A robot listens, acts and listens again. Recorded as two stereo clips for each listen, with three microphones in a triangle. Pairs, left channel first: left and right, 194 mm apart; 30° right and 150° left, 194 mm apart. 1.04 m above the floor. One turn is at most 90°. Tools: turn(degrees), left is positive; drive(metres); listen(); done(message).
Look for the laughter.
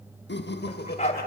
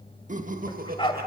turn(degrees=90)
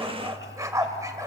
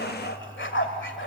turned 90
turn(degrees=25)
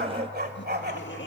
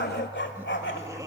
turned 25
turn(degrees=80)
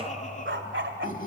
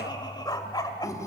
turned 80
turn(degrees=45)
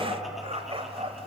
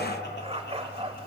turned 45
listen()
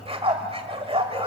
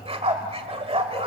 listen()
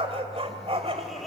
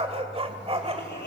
done("Facing the laughter.")